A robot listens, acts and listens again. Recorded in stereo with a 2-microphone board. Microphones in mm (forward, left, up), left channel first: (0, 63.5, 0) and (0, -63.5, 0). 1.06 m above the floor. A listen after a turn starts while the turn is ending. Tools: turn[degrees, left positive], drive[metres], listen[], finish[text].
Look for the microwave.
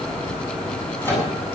Thought: The microwave: about 15° left or 165° left.
Action: turn[15]
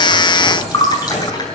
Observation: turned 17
Action: listen[]
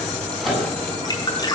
Action: finish[Facing the microwave.]